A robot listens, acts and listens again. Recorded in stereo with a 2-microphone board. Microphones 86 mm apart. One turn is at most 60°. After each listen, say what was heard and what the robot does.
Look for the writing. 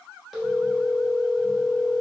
Keep listening.
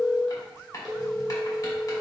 The writing: about 40° left or 140° left. Turn 40° left.
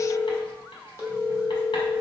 Keep listening.
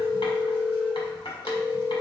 So it is at 100° left. Turn 60° left.
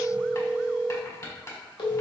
The writing is now 40° left. Turn 40° left.
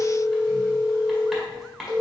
Facing the writing, 1 to 2 m away.